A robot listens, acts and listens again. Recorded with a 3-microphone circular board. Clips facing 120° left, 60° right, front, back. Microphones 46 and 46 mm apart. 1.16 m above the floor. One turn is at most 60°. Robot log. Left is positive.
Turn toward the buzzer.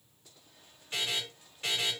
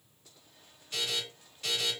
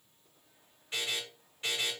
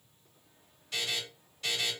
note: The buzzer: 65° left.
cmd yaw +60
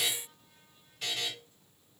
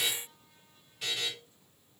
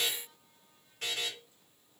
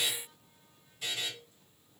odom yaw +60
note: The buzzer is now 30° left.
cmd yaw +30
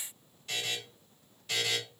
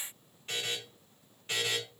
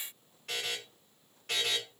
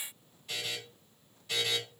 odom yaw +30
end: Facing the buzzer, 2 to 4 m away.